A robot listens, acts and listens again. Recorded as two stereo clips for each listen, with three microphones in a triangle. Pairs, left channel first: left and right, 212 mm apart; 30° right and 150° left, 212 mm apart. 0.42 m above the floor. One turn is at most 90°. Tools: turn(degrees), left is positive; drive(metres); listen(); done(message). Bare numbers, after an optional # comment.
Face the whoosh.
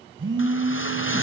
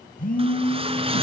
# The whoosh: 90° left.
turn(90)
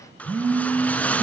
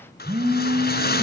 done("Found it: a whoosh, straight ahead.")